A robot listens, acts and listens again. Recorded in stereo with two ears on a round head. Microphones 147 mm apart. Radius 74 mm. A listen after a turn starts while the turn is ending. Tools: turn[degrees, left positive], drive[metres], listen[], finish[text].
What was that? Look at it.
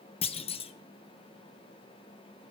Thought: The clunk: about 35° left or 145° left.
Action: turn[35]
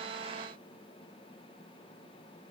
Action: listen[]
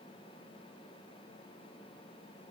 Action: finish[I heard a clunk, but can't make it out now. It was about straight ahead or 110° left.]